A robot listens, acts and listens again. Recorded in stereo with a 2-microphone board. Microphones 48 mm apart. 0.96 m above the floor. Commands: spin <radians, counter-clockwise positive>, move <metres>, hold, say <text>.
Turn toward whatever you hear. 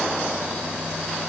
hold
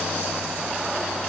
hold
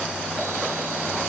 say I can't make out anything to turn to.